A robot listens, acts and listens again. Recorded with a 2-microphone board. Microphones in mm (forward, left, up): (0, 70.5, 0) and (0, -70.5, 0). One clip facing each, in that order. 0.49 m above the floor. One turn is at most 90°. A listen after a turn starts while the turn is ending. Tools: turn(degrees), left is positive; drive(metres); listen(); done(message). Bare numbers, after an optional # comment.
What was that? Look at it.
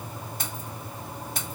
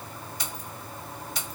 # The keys jangling: about 50° left or 130° left.
turn(50)
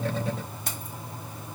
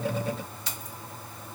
# So it is at 65° left.
turn(65)
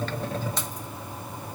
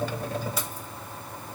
# The keys jangling is now 10° right.
turn(-10)
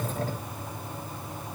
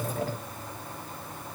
listen()
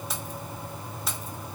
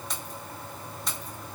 done("Found it: keys jangling, straight ahead, 1 to 2 m away.")